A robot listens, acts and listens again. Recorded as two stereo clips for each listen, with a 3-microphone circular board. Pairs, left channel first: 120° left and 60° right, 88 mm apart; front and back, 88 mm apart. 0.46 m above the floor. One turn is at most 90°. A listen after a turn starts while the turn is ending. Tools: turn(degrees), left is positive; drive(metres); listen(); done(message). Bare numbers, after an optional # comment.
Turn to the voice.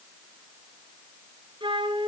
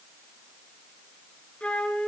listen()
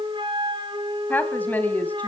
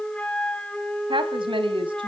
# The woman speaking: 170° right.
turn(-90)
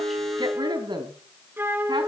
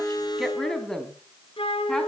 # The woman speaking is now 85° right.
turn(-85)
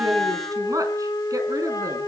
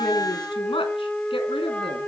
# The woman speaking is now 15° right.
turn(-15)
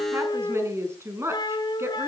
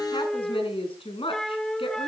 done("Facing the woman speaking.")